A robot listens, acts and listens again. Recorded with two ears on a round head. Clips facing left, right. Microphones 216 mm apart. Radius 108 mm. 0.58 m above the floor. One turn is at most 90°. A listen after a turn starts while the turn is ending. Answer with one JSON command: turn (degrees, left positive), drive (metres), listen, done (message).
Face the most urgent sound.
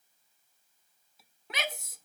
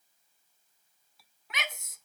{"turn": 30}
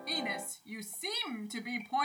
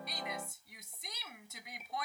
{"turn": 90}
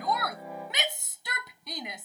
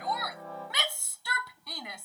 {"turn": 20}
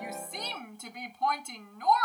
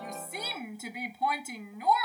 {"done": "Facing the shout."}